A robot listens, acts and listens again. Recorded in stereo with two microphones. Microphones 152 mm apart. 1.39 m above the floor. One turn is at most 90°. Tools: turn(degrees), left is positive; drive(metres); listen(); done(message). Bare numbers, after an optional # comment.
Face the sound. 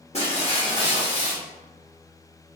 # The breaking glass: about 45° left or 135° left.
turn(45)
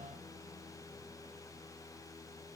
listen()
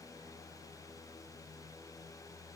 done("I heard breaking glass, but can't make it out now. It was about straight ahead or 90° left.")